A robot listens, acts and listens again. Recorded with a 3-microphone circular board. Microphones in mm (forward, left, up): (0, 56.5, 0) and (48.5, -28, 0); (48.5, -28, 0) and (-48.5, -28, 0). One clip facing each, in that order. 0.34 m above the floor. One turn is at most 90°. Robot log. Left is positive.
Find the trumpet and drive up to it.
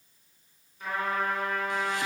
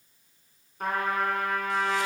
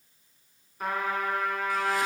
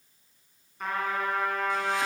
note: The trumpet: 85° right.
cmd yaw -85
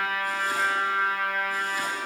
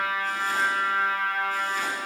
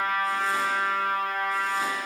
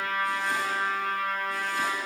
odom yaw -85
cmd fwd 1.0
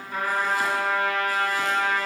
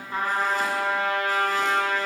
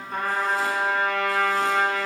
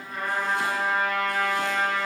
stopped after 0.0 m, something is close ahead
end: Blocked. The trumpet is further on, straight ahead.